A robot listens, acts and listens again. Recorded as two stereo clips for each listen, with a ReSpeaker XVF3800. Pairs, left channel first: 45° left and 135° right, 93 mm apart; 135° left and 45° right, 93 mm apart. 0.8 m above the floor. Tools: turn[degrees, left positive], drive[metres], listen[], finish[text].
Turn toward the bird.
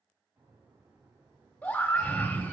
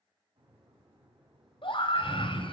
Thought: The bird: 60° right.
Action: turn[-60]
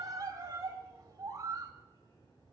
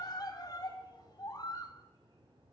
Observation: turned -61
Action: finish[Facing the bird, over 4 m away.]